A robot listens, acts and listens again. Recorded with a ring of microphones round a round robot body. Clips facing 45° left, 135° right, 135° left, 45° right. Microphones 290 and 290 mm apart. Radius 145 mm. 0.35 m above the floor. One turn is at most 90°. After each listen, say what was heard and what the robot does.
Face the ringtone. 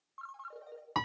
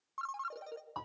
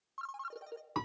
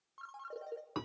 The ringtone: 160° right. Turn 90° right.
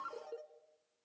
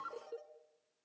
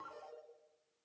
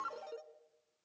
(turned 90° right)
The ringtone is now 45° right. Turn 45° right.
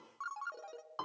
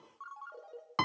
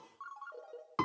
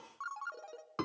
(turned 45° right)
Found it: a ringtone, straight ahead.